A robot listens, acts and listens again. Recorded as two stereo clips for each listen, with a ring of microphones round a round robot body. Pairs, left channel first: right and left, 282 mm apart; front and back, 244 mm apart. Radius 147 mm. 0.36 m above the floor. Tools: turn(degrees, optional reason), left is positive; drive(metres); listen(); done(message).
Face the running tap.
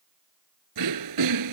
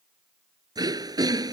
listen()
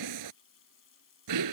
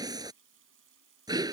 turn(degrees=-135, reason="The running tap: 135° right.")
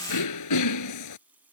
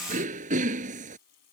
done("Found it: a running tap, straight ahead.")